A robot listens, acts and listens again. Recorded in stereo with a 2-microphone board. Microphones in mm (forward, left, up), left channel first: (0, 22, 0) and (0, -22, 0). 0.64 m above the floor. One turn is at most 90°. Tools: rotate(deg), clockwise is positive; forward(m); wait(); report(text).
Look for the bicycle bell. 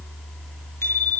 rotate(-90)
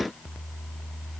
wait()
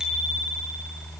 rotate(15)
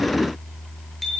report("Facing the bicycle bell.")